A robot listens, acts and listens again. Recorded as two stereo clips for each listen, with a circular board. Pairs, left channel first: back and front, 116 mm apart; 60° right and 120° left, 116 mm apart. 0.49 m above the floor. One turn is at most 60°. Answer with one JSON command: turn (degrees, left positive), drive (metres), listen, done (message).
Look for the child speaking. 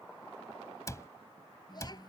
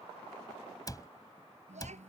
{"turn": 60}
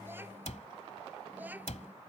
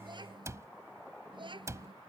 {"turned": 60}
{"turn": 60}
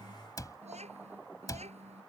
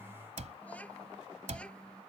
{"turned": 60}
{"turn": 20}
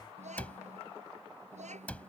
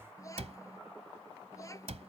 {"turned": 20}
{"done": "Facing the child speaking."}